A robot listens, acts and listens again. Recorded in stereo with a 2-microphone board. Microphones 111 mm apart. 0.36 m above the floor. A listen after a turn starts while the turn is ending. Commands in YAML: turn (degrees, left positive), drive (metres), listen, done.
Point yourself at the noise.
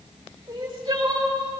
turn: -45
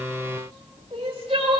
turn: -85
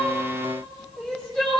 done: "Found it: crying, straight ahead, 2 to 4 m away."